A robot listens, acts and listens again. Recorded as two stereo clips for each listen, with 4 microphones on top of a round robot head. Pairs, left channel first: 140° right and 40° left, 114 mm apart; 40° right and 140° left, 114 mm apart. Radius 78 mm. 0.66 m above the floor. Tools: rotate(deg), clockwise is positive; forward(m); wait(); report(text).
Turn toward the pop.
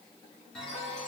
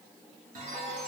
wait()
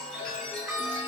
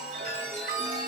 wait()
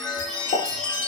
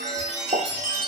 rotate(175)
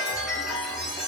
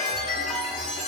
report("I heard a pop from this way, but can't make it out now.")